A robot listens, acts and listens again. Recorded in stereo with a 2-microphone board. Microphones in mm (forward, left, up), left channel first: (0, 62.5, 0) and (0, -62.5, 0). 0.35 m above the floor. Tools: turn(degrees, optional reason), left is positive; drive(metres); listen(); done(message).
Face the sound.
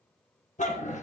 turn(degrees=75, reason="The dog barking: about 75° left or 105° left.")
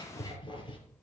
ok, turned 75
turn(degrees=40, reason="So it is at 40° left.")
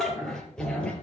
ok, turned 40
turn(degrees=10, reason="The dog barking is now 10° left.")
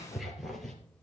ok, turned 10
done("Found it: a dog barking, straight ahead, 2 to 4 m away.")